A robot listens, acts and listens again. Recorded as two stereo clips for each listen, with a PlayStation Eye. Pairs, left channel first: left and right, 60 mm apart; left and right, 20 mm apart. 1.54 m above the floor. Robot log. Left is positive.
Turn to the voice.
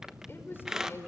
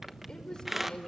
note: The woman speaking: about 40° left or 140° left.
cmd yaw +40
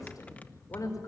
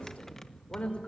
note: So it is at 105° left.
cmd yaw +105
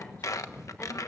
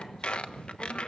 note: The woman speaking is now 25° left.
cmd yaw +25
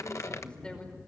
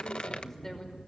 note: The woman speaking is now 15° left.
cmd yaw +15
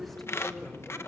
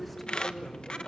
end: Found it: a woman speaking, straight ahead.